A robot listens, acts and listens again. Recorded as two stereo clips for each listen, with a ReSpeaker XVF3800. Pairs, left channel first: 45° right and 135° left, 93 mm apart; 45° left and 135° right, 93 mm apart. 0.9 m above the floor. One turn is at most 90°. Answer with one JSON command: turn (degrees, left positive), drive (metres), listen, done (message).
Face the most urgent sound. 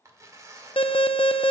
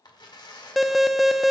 {"turn": -45}
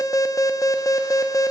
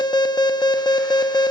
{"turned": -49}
{"done": "Facing the alarm, under 1 m away."}